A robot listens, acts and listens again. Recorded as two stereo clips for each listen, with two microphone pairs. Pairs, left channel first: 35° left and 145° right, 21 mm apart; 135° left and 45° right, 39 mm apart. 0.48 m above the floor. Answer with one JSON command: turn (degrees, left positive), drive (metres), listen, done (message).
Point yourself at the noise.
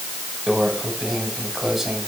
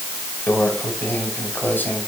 {"turn": 150}
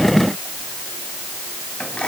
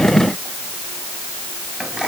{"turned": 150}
{"turn": 25}
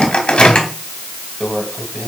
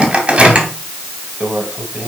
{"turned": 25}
{"turn": 15}
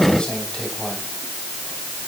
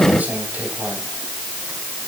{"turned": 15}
{"listen": true}
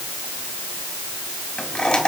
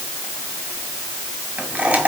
{"done": "Facing the microwave, 1 to 2 m away."}